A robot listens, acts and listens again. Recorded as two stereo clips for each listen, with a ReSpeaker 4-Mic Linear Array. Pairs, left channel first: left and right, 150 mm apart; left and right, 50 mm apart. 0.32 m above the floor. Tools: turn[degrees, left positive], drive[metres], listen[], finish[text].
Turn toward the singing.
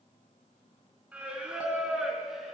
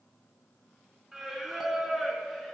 Action: turn[30]
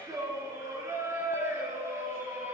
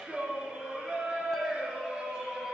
Thought: So it is at 15° right.
Action: turn[-15]
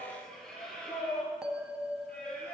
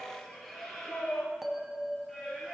Action: finish[Found it: singing, straight ahead, 2 to 4 m away.]